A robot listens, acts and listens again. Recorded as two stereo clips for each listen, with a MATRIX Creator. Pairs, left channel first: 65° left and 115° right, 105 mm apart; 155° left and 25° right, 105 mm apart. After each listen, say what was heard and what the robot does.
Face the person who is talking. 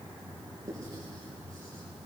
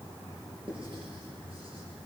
Keep listening.
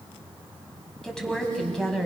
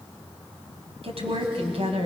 The woman speaking: 15° right. Turn 15° right.
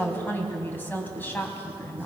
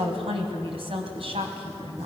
Facing the woman speaking.